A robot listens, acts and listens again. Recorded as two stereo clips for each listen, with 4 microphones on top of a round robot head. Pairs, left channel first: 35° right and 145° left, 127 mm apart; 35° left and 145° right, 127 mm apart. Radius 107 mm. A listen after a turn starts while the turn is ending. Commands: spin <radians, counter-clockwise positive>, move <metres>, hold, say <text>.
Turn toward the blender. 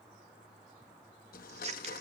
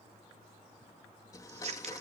spin -0.52
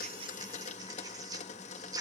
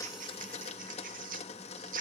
say Found it: a blender, straight ahead.